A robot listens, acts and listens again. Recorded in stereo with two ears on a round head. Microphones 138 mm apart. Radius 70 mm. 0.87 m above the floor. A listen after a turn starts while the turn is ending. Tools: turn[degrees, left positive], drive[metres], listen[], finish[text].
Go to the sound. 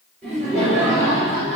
Action: turn[30]
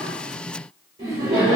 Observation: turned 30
Thought: So it is at 25° right.
Action: turn[-25]
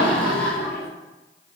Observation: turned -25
Thought: The laughter is now 15° left.
Action: turn[15]
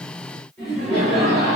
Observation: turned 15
Action: drive[1.0]
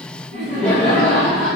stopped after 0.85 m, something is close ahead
Thought: The laughter is now 10° left.
Action: turn[10]
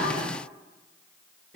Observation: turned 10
Action: finish[Arrived at the laughter, straight ahead.]